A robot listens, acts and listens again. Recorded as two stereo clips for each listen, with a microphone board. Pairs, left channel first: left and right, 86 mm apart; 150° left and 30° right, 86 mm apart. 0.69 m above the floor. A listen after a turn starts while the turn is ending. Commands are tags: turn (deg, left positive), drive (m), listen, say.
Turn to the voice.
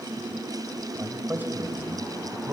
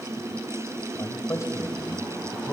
<turn deg="-150"/>
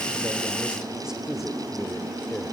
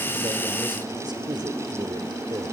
<say>Facing the man speaking.</say>